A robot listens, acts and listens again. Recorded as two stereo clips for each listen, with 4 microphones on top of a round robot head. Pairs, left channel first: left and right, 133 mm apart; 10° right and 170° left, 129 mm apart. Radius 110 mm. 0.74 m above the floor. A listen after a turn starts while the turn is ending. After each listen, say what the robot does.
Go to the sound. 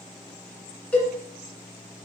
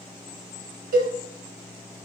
Turn 170° left.
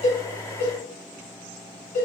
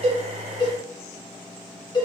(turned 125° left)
Turn 45° left.
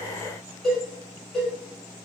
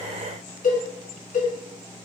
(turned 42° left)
Drive 1.0 m forward.
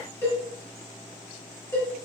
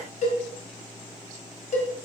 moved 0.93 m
Turn 15° left.
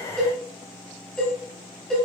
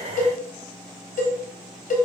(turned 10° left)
Drive 1.0 m forward.
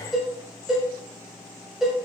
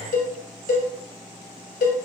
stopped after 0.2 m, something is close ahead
I am next to the cowbell.